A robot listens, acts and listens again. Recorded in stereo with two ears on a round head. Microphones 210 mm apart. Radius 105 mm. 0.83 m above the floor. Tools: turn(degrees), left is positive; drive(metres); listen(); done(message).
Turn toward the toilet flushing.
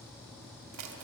listen()
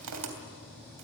listen()
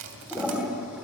turn(degrees=-30)
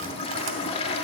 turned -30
turn(degrees=25)
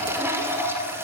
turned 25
turn(degrees=-10)
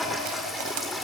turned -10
done("Found it: a toilet flushing, straight ahead, 2 to 4 m away.")